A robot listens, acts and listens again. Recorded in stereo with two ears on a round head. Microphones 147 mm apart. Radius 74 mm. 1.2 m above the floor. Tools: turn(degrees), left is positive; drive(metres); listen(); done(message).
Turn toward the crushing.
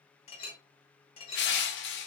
turn(degrees=90)
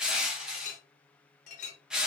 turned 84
done("Found it: crushing, straight ahead, under 1 m away.")